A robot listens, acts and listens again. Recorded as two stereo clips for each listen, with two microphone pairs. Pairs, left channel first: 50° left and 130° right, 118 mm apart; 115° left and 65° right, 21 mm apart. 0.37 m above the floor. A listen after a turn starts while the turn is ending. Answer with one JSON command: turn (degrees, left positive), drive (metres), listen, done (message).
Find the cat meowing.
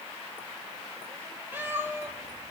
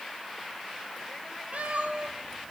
{"turn": -60}
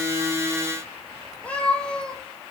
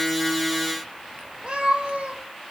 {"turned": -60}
{"turn": -35}
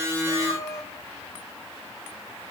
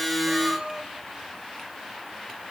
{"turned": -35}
{"turn": -10}
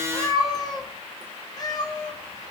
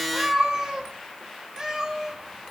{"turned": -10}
{"done": "Found it: a cat meowing, straight ahead."}